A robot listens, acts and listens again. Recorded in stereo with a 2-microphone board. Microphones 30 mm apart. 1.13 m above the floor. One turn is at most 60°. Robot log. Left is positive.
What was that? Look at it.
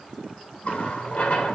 note: The running tap: about 45° left or 135° left.
cmd yaw +45
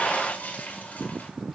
note: So it is at 95° left.
cmd yaw +60
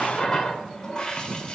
note: The running tap is now 30° left.
cmd yaw +30
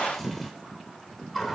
end: Found it: a running tap, straight ahead.